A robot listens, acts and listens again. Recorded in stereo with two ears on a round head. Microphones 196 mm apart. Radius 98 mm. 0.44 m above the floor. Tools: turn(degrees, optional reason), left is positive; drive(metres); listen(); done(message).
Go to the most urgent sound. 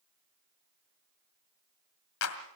listen()
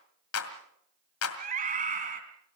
turn(degrees=-40, reason="The scream: about 40° right or 140° right.")
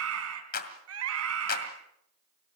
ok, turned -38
turn(degrees=-100, reason="So it is at 100° right.")
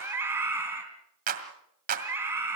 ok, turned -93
turn(degrees=-10, reason="The scream is now 10° right.")
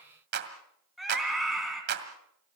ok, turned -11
drive(metres=1.0)
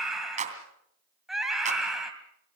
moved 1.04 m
drive(metres=1.0)
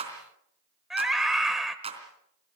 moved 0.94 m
drive(metres=1.0)
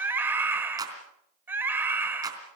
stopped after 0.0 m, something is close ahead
turn(degrees=-10, reason="The scream is now 10° right.")
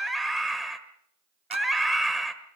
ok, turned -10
done("Arrived at the scream, straight ahead.")